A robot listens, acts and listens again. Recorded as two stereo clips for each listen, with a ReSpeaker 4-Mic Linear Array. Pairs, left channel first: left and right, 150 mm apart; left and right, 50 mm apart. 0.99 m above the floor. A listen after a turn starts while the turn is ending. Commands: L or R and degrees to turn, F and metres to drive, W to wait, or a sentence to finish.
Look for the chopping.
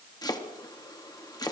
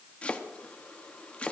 L25
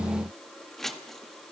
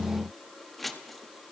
Facing the chopping, 1 to 2 m away.